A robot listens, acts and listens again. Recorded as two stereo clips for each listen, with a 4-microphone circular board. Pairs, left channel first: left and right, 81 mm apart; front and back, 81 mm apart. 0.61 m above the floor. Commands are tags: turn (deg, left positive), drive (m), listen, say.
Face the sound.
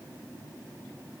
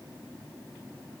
<listen/>
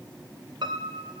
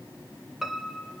<turn deg="-90"/>
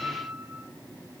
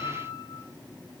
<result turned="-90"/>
<say>Found it: a piano, straight ahead, 1 to 2 m away.</say>